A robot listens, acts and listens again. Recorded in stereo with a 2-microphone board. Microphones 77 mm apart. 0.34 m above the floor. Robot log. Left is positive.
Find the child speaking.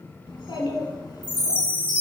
note: The child speaking: about 70° left or 110° left.
cmd yaw +70
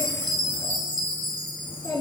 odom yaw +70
note: So it is at 70° left.
cmd yaw +70
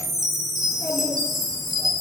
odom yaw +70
end: Facing the child speaking.